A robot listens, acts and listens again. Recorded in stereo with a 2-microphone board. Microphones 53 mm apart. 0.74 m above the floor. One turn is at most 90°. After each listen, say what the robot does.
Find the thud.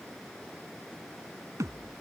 Turn 90° right.
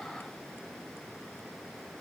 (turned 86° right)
Facing where the thud came from. I can't hear it now.